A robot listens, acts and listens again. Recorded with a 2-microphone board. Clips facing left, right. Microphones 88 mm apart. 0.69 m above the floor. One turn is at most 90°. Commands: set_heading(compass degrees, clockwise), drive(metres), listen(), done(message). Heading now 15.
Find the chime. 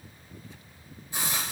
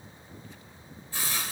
listen()
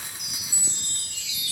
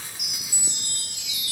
set_heading(45)
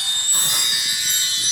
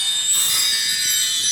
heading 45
set_heading(30)
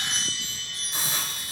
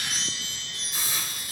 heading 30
done("Facing the chime, over 4 m away.")